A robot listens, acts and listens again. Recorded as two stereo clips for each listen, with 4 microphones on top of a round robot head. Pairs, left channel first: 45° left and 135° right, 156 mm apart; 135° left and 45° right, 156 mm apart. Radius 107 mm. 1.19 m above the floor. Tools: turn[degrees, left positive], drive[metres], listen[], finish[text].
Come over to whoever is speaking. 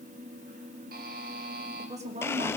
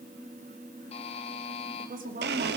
Thought: The woman speaking: 85° right.
Action: turn[-85]
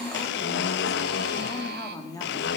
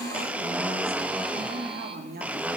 Thought: The woman speaking is now 20° right.
Action: turn[-20]
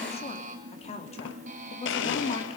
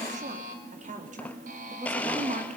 Action: drive[1.0]
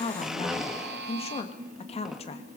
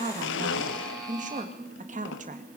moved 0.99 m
Action: drive[1.0]
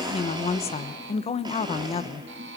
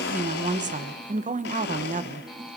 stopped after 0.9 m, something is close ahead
Action: finish[Arrived at the woman speaking, straight ahead.]